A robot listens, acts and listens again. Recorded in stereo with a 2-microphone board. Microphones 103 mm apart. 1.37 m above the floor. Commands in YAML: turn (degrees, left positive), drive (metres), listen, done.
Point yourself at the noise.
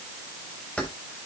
turn: 30
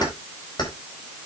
turn: 135
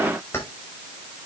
turn: 20
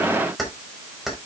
done: "Facing the keys jangling."